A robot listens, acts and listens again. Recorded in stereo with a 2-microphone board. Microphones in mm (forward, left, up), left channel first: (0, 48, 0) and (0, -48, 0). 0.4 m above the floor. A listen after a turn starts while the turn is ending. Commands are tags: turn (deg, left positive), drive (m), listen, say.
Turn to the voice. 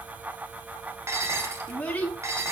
<turn deg="15"/>
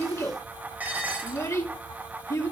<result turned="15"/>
<turn deg="150"/>
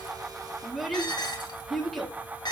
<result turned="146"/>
<say>Facing the child speaking, 2 to 4 m away.</say>